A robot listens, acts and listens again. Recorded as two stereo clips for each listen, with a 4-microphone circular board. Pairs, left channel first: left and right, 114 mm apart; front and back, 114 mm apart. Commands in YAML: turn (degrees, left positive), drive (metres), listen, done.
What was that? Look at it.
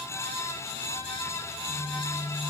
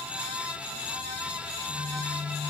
done: "Facing the phone buzzing."